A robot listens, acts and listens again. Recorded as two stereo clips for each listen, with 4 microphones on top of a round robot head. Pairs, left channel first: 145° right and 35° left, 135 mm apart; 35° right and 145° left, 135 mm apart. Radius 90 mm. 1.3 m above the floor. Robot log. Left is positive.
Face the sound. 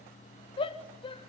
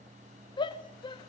note: The shout: 90° right.
cmd yaw -90
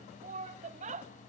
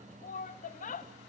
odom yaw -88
end: Facing the shout, 1 to 2 m away.